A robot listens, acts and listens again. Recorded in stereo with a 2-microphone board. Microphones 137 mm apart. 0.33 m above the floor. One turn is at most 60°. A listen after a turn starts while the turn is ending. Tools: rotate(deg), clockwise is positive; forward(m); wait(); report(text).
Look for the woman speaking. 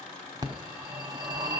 wait()
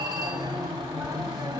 wait()
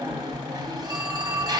report("I can't make out a woman speaking, only a phone ringing.")